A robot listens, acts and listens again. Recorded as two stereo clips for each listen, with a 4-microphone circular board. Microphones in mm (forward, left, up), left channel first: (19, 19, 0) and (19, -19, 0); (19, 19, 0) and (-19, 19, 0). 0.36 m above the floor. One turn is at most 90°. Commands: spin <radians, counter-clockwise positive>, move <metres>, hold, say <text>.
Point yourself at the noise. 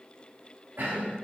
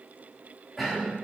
spin -1.57
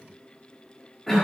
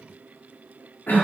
say Found it: a cough, straight ahead, 1 to 2 m away.